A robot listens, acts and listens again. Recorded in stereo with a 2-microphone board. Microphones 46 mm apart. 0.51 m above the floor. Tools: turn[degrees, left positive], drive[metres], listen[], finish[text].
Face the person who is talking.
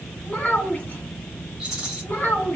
Thought: The child speaking: about 35° left or 145° left.
Action: turn[35]
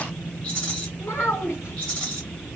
Thought: So it is at 110° left.
Action: turn[110]
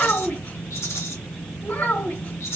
Thought: The child speaking is now 45° left.
Action: turn[45]
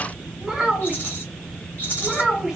Action: finish[Found it: a child speaking, straight ahead, 1 to 2 m away.]